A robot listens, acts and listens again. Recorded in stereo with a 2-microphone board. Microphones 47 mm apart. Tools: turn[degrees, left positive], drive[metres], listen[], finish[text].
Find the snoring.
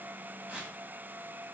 Action: listen[]
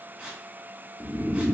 Thought: The snoring: about 45° left or 135° left.
Action: turn[45]
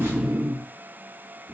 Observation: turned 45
Action: finish[Found it: snoring, straight ahead.]